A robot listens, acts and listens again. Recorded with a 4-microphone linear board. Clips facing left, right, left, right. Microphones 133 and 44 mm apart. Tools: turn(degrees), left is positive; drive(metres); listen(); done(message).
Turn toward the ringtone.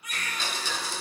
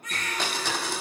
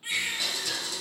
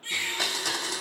listen()
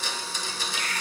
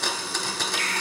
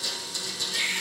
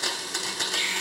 listen()
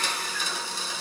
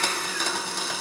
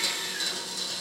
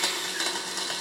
done("I can't make out a ringtone to turn to.")